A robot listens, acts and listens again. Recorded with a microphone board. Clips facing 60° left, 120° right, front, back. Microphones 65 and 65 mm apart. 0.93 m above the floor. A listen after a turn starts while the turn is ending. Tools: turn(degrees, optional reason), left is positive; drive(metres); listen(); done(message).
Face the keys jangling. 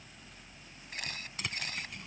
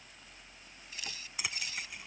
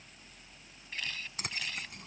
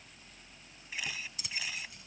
turn(degrees=-35, reason="The keys jangling: 35° right.")
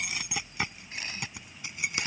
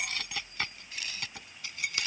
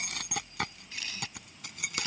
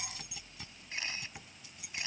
turn(degrees=-10, reason="The keys jangling is now 10° right.")
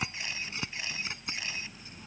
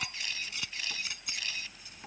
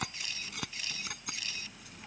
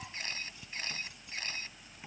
done("Facing the keys jangling.")